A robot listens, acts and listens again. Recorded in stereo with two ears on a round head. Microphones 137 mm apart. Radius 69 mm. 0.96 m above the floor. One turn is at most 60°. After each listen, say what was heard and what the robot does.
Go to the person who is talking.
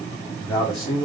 The man speaking: about 30° left or 150° left. Turn 30° left.
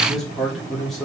Drive 1.0 m forward.
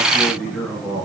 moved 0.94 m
Drive 1.0 m forward.
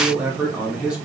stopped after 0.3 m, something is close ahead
Arrived at the man speaking, straight ahead.